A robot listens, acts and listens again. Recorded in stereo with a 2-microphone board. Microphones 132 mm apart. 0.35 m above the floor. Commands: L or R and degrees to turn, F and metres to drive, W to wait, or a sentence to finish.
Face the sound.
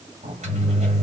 R60
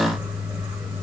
R10
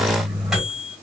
Found it: a microwave, straight ahead.